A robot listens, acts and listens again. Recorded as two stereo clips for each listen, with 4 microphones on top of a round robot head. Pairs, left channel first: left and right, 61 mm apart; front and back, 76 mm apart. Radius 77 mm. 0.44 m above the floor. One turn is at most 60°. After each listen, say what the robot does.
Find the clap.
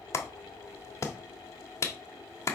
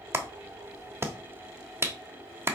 Turn 60° left.
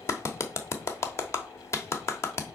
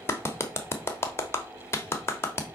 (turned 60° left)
Turn 55° left.
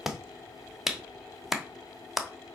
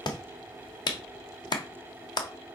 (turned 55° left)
Facing the clap, 1 to 2 m away.